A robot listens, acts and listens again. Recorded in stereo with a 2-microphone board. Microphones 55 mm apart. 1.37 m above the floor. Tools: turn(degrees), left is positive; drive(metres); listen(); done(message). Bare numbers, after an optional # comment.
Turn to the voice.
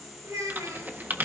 turn(-90)
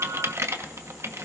listen()
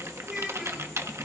# The child speaking is now 10° right.
turn(-10)
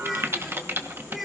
done("Found it: a child speaking, straight ahead.")